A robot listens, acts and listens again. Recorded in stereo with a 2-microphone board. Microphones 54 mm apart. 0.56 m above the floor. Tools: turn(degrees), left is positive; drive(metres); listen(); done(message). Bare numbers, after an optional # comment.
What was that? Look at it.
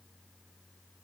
listen()
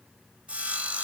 # The sawing: about 25° right or 155° right.
turn(-25)
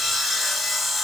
done("Found it: sawing, straight ahead, 2 to 4 m away.")